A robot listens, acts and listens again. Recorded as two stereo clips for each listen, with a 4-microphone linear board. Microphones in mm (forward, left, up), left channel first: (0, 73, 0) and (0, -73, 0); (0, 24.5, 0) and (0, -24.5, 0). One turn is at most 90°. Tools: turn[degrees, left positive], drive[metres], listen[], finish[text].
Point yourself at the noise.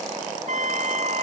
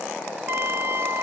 Thought: The trumpet: about 55° right or 125° right.
Action: turn[-55]
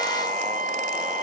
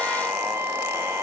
Thought: So it is at 70° right.
Action: turn[-70]
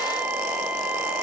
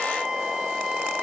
Thought: The trumpet is now 10° right.
Action: turn[-10]
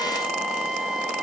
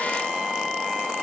Action: finish[Found it: a trumpet, straight ahead.]